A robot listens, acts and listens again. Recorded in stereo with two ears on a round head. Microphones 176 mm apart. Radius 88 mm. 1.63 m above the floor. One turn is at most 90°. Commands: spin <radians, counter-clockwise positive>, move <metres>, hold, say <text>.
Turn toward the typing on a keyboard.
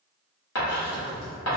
spin -0.52
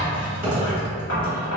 spin -1.57
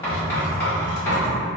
spin -1.31
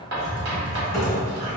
say Facing the typing on a keyboard, 1 to 2 m away.